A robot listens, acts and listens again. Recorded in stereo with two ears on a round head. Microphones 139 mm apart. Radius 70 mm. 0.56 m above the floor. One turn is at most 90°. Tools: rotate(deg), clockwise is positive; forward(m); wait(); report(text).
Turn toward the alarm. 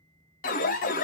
rotate(-55)
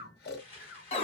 rotate(-45)
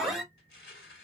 report("Facing the alarm, under 1 m away.")